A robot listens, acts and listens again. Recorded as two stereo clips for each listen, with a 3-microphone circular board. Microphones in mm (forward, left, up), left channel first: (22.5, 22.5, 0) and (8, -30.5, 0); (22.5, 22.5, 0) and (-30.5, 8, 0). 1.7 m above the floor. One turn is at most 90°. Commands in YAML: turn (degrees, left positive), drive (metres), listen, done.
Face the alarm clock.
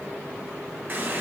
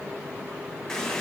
listen: true
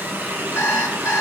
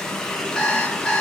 turn: 90
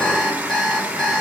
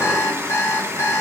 done: "Found it: an alarm clock, straight ahead."